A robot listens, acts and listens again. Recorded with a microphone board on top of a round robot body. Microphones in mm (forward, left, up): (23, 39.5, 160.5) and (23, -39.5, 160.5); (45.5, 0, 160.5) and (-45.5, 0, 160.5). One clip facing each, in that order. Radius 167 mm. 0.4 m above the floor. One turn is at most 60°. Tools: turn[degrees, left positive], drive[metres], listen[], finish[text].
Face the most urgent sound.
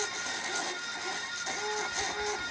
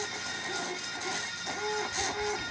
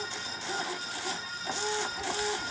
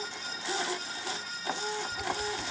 Action: listen[]
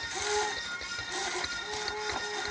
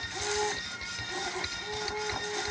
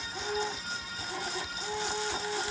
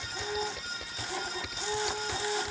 Action: listen[]
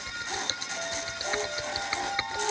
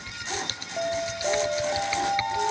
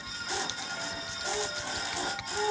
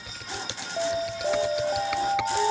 Thought: The alarm: 150° right.
Action: turn[-60]
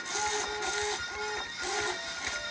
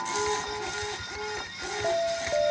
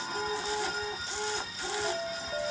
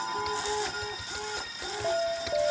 Thought: The alarm is now 115° right.
Action: turn[-60]
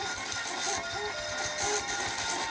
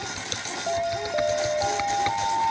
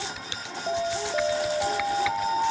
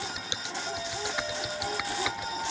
Thought: The alarm is now 50° right.
Action: turn[-50]
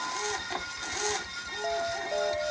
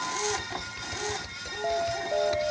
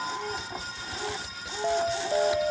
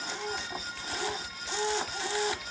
Action: finish[Found it: an alarm, straight ahead.]